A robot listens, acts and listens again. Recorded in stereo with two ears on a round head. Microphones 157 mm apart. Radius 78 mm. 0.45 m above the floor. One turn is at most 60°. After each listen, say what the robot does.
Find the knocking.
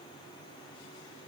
Keep listening.
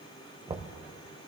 Turn 25° right.
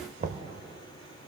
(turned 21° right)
Turn 60° right.
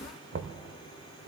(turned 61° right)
Turn 60° right.
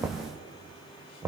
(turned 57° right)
Turn 15° right.
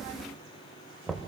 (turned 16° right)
Found it: knocking, straight ahead, under 1 m away.